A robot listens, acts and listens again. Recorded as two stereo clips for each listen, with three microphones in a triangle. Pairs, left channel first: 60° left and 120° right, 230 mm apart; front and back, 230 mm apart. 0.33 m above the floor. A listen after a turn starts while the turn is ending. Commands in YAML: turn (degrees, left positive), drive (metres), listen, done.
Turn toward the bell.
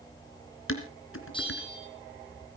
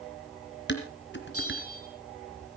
turn: -10
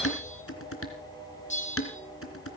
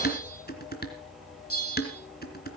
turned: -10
done: "Facing the bell, over 4 m away."